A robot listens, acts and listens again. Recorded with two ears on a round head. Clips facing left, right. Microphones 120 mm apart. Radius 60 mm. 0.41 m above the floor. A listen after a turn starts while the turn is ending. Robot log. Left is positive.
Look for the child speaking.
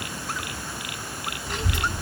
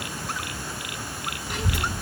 cmd yaw -30
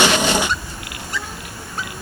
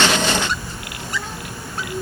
cmd yaw -30
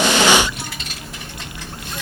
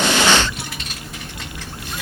cmd yaw +30
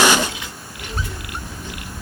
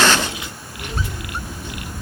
note: So it is at 35° right.
cmd yaw -35
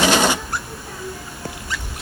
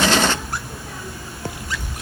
end: Found it: a child speaking, straight ahead, 2 to 4 m away.